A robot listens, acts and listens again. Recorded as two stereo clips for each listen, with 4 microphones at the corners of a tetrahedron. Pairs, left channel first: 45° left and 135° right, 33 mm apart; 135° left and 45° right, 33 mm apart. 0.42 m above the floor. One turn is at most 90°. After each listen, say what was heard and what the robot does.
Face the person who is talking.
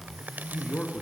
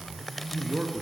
The man speaking: 10° right. Turn 10° right.
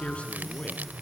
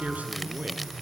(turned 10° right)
The man speaking is now 10° right. Turn 10° right.
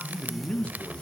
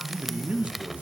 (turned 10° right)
The man speaking is now 10° right. Turn 10° right.
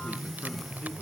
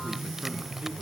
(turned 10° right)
Keep listening.
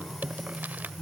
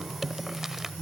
Keep listening.
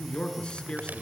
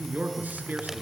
The man speaking is now 20° right. Turn 20° right.
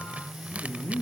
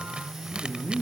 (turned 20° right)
Facing the man speaking, over 4 m away.